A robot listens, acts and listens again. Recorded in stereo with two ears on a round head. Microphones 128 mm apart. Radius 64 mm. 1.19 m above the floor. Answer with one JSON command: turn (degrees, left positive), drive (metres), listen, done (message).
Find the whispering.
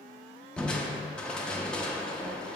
{"listen": true}
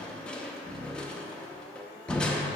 {"listen": true}
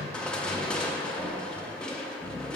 {"done": "I can't make out whispering to turn to."}